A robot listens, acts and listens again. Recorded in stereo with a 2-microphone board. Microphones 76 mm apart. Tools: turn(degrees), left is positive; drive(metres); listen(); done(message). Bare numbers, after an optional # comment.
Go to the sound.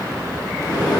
# The microwave: about 65° left or 115° left.
turn(65)
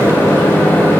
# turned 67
# So it is at 30° left.
turn(30)
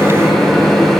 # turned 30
drive(1.0)
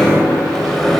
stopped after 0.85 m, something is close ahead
done("I am next to the microwave.")